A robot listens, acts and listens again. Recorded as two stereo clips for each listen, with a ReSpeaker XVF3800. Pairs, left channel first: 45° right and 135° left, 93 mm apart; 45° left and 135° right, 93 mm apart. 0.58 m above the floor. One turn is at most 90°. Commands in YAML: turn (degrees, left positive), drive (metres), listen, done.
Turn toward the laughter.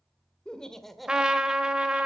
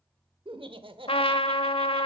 turn: -90
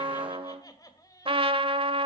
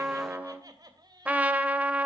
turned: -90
turn: -90
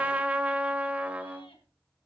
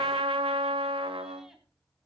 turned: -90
listen: true
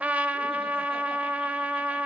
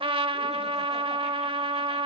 listen: true
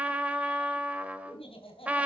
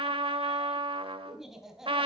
turn: -50
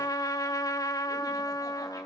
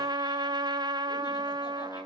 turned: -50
listen: true
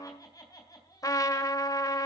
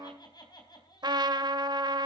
done: "Found it: laughter, straight ahead."